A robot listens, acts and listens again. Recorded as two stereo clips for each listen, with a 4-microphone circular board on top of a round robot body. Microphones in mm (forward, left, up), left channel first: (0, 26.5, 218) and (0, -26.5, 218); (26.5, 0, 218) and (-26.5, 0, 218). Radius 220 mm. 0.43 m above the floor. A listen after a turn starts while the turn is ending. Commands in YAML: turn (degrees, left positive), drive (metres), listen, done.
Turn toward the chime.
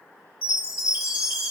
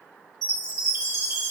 turn: -160
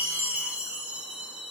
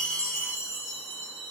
turn: -35
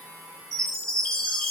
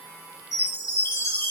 turn: 10
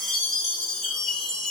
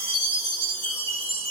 done: "Facing the chime."